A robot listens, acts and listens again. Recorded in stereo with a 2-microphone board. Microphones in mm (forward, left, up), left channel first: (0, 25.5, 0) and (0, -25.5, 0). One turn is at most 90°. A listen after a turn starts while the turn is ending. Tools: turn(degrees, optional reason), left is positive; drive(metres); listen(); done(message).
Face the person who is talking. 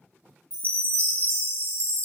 listen()
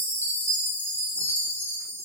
listen()
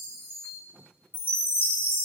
done("I can't make out anyone speaking, only a chime.")